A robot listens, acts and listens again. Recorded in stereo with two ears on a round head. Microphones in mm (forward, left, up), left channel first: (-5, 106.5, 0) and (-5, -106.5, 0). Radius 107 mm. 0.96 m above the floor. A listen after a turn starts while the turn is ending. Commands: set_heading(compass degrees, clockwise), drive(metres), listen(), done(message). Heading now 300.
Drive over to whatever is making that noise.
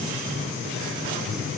listen()
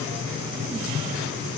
listen()
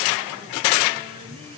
done("I can't make out anything.")